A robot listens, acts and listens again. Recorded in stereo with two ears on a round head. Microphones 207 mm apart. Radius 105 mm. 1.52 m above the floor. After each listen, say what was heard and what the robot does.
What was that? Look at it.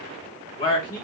The man speaking: about 20° left or 160° left. Turn 20° left.
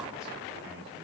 Keep listening.
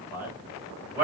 So it is at 10° right. Turn 10° right.
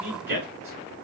The man speaking is now 10° right. Turn 10° right.
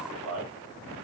Found it: a man speaking, straight ahead.